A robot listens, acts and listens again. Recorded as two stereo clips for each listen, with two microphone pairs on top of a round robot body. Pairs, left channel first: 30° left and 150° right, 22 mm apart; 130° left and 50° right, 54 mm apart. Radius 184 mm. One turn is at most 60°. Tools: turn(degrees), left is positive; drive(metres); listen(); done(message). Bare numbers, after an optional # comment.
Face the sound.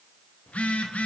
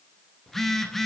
# The phone buzzing: 40° left.
turn(40)
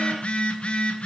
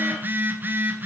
done("Found it: a phone buzzing, straight ahead, under 1 m away.")